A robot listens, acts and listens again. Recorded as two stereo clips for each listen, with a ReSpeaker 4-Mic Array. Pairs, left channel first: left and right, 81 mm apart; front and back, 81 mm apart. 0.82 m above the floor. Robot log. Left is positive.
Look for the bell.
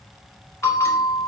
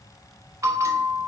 note: The bell: 140° left.
cmd yaw +140
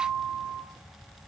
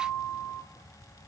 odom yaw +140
note: The bell is now 35° right.
cmd yaw -35
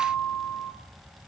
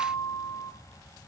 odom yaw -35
end: Facing the bell, 1 to 2 m away.